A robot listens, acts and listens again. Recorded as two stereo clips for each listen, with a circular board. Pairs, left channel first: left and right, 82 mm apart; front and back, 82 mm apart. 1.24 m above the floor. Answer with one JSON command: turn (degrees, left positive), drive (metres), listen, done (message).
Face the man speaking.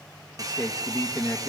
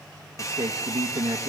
{"turn": 165}
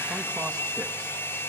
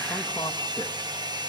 {"listen": true}
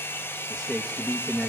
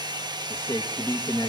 {"done": "Facing the man speaking, 1 to 2 m away."}